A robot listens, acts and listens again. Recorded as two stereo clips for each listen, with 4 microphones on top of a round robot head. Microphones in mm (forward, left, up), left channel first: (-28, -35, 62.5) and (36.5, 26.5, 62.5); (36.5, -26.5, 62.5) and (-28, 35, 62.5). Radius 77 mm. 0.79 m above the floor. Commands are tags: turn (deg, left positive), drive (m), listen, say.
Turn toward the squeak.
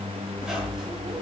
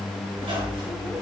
<turn deg="125"/>
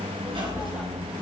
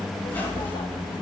<turn deg="25"/>
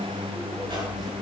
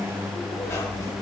<listen/>
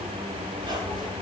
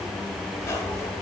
<listen/>
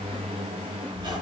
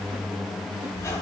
<turn deg="15"/>
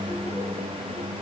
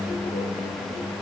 <listen/>
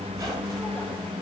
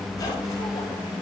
<listen/>
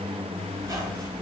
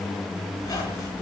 <say>Facing the squeak, over 4 m away.</say>